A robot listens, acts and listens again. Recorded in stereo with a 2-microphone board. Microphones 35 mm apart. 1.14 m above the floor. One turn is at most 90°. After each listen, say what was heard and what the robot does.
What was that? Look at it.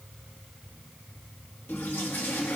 The toilet flushing: about 75° left or 105° left. Turn 75° left.
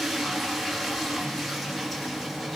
Facing the toilet flushing, 1 to 2 m away.